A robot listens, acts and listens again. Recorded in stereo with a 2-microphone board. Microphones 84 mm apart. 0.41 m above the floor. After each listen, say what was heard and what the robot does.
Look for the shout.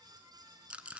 Keep listening.
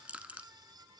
Keep listening.
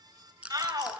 The shout: about 50° right or 130° right. Turn 50° right.
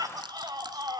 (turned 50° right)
So it is at 65° right. Turn 65° right.
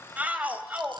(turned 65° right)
The shout is now 20° right. Turn 20° right.
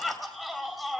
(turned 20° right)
Found it: a shout, straight ahead.